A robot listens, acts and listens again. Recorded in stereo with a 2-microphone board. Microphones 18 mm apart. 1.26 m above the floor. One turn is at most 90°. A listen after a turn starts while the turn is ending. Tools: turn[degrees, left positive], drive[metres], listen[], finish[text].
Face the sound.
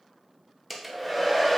Action: turn[-30]
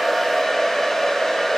Thought: So it is at 25° left.
Action: turn[25]
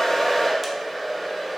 Thought: The hair dryer is now 10° right.
Action: turn[-10]
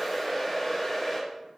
Action: finish[Facing the hair dryer.]